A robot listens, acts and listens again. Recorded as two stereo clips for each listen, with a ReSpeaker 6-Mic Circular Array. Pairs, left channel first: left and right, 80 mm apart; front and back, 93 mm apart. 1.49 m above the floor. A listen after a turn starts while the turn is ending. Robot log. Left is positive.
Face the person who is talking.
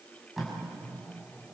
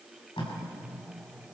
cmd idle
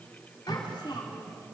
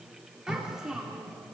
note: The child speaking: 100° left.
cmd yaw +100
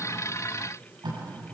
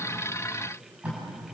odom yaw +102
cmd idle
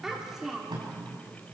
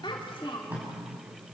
end: Facing the child speaking.